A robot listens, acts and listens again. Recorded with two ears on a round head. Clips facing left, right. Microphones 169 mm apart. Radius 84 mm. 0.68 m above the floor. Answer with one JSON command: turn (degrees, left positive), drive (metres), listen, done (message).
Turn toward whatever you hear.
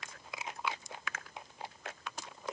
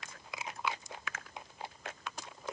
{"listen": true}
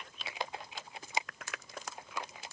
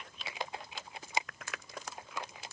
{"listen": true}
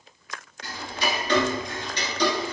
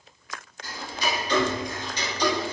{"turn": 55}
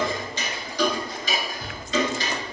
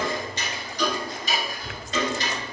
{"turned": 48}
{"turn": 75}
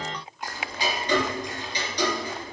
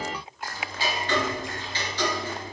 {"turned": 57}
{"turn": 15}
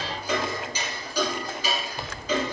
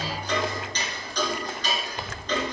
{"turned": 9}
{"done": "Facing the ticking."}